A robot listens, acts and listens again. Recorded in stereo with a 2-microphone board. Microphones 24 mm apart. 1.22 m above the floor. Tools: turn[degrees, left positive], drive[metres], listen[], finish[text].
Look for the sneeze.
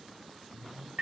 Action: listen[]
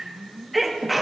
Action: turn[-30]
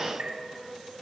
Action: listen[]
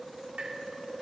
Action: finish[I heard a sneeze, but can't make it out now. It was about 25° left or 145° right.]